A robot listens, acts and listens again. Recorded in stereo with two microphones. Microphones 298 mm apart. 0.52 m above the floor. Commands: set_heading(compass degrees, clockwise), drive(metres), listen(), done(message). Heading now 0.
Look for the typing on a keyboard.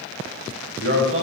listen()
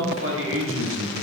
listen()
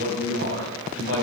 done("I can't make out typing on a keyboard, only a man speaking.")